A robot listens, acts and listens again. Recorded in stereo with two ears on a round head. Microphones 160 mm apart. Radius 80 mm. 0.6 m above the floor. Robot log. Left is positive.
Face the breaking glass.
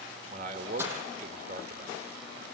cmd yaw -30
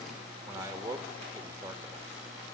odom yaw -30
cmd idle
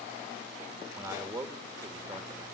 end: I heard breaking glass, but can't make it out now. It was about 15° left or 135° right.